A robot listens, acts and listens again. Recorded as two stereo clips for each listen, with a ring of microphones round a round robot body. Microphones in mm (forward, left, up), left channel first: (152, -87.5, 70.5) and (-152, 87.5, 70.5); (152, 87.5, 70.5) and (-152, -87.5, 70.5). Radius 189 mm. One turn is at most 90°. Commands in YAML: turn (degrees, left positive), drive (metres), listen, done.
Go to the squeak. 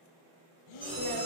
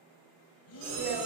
turn: -90
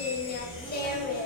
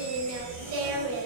turn: -55
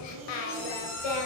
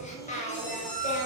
drive: 1.0
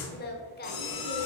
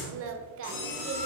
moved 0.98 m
drive: 1.0
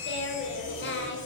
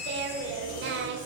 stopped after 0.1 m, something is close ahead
turn: 10
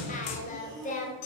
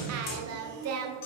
done: "I am next to the squeak."